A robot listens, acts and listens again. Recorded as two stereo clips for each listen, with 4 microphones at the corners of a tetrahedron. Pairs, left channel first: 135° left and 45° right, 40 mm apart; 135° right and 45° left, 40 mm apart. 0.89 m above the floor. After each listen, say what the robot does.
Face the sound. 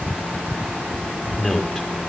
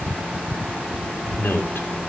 Turn 140° right.
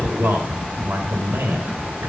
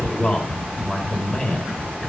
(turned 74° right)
Turn 60° right.
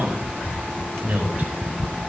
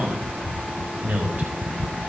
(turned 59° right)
Facing the man speaking, over 4 m away.